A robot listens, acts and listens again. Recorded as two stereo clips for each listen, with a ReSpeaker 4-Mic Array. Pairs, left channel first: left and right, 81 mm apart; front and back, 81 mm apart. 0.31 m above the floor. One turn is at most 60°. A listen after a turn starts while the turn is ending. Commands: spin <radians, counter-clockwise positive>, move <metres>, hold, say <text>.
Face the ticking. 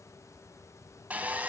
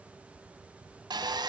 hold
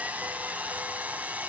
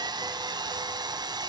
hold
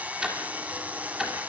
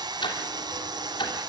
say Facing the ticking, 2 to 4 m away.